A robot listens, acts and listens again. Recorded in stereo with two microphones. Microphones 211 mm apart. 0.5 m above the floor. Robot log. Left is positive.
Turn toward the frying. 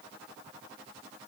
cmd idle
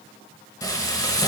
note: The frying: about 15° left or 165° left.
cmd yaw +15
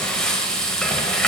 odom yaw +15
end: Facing the frying, under 1 m away.